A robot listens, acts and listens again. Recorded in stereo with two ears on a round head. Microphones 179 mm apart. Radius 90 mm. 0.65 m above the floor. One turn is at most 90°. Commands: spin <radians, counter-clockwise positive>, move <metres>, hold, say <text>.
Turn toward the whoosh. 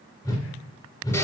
spin 0.35
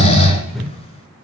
say Found it: a whoosh, straight ahead.